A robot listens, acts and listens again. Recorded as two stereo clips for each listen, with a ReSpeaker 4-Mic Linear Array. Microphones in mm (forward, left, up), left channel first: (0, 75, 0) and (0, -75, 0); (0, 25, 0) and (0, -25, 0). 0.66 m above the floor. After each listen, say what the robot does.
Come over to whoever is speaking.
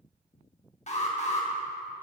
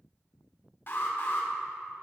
Keep listening.
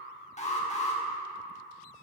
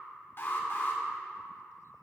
Keep listening.
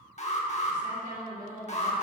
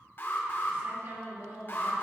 Turn 55° right.
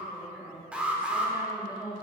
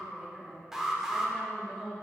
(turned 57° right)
Turn 15° right.
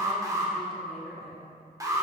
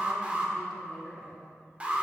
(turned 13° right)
Drive 1.0 m forward.
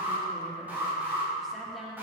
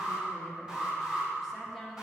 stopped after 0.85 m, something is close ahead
I am next to the woman speaking.